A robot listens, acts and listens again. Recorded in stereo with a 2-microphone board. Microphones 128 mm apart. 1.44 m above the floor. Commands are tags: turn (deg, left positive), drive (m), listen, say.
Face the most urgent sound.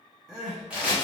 <turn deg="30"/>
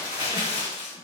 <listen/>
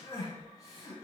<turn deg="150"/>
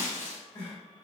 <turn deg="30"/>
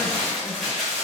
<listen/>
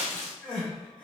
<say>Facing the crying, 1 to 2 m away.</say>